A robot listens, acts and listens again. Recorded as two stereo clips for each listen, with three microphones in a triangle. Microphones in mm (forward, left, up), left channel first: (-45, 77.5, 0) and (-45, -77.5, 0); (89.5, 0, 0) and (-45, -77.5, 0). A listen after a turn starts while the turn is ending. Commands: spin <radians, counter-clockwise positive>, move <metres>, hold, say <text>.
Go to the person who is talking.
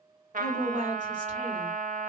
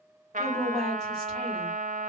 spin -1.05
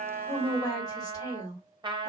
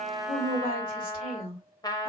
spin 0.44
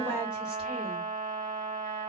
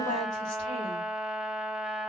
hold
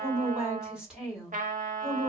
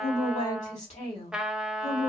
move 1.0
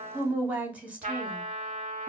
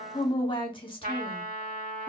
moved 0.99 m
spin -0.26
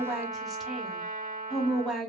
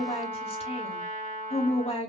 move 1.0
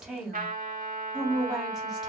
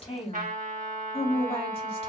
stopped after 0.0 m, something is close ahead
say Arrived at the woman speaking, straight ahead.